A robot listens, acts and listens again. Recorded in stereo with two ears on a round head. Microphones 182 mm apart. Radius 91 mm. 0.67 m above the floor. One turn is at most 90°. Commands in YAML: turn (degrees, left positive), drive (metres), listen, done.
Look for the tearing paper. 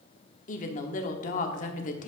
listen: true
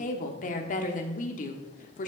listen: true
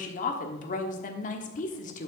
done: "I can't make out tearing paper to turn to."